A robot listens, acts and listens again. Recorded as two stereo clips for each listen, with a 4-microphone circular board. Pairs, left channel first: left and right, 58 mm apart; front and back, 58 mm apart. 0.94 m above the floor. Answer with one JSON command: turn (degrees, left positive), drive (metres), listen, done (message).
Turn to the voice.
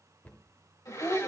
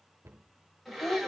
{"turn": 50}
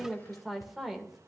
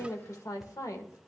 {"done": "Facing the woman speaking, 2 to 4 m away."}